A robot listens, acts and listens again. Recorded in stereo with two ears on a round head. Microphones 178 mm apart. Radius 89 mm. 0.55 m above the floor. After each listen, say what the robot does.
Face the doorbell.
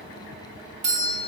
Turn 40° right.
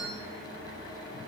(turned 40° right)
Keep listening.
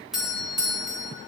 Facing the doorbell.